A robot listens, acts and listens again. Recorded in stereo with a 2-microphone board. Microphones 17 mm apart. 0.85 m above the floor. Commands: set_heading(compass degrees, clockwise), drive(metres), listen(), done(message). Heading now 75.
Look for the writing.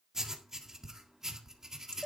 set_heading(100)
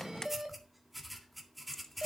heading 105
done("Found it: writing, straight ahead.")